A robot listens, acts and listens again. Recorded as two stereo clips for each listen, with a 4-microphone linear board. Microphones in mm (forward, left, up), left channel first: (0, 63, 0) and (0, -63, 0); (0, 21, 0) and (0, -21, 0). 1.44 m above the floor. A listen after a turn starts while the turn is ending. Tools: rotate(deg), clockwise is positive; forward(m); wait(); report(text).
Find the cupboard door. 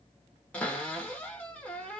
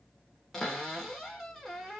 rotate(-30)
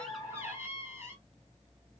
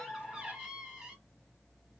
rotate(20)
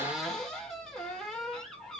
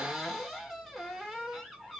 report("Facing the cupboard door.")